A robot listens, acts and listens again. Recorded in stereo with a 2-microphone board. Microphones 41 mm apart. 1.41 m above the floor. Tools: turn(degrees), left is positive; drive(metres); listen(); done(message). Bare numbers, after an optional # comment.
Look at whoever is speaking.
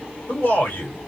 # The man speaking: about 55° left or 125° left.
turn(55)
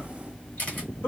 # So it is at 70° left.
turn(70)
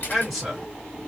done("Facing the man speaking.")